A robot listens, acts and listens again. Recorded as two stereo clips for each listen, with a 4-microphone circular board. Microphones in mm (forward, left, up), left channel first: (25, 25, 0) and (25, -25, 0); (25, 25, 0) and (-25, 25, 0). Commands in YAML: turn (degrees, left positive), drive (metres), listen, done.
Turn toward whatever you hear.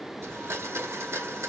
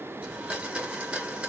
turn: -115
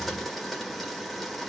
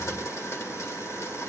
done: "Facing the blender, 1 to 2 m away."